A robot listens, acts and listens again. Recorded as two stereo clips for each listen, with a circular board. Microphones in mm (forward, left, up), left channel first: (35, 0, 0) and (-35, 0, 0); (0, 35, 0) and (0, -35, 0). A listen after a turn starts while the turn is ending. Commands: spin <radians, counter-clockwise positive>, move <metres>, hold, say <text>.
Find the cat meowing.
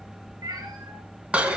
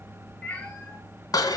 spin 2.79
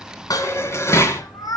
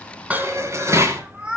spin -0.26
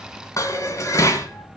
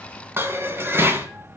hold
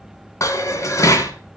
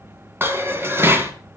hold
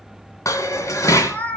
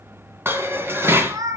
spin -1.13
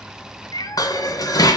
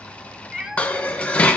spin -0.17
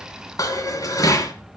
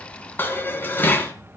hold
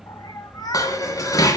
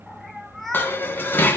say Found it: a cat meowing, straight ahead, 1 to 2 m away.